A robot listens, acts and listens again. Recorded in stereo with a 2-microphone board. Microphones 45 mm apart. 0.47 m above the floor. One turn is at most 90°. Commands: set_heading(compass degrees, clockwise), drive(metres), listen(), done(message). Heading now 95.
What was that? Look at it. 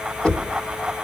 set_heading(70)
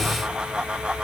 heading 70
listen()
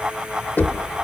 set_heading(340)
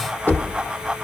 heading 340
set_heading(280)
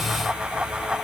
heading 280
listen()
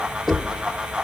set_heading(290)
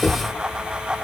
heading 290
done("Found it: knocking, straight ahead, 1 to 2 m away.")